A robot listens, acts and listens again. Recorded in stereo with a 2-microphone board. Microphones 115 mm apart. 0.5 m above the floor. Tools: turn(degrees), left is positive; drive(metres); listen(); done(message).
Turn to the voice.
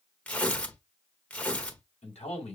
turn(degrees=70)
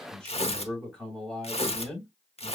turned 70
done("Facing the man speaking, 2 to 4 m away.")